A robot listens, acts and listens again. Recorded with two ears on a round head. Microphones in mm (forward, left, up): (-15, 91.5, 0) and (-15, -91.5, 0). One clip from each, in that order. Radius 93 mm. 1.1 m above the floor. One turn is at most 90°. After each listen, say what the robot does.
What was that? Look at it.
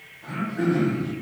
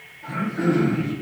Turn 30° left.
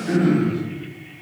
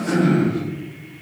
Turn 25° right.
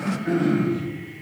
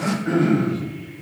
Turn 20° right.
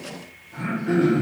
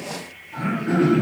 Facing the throat clearing.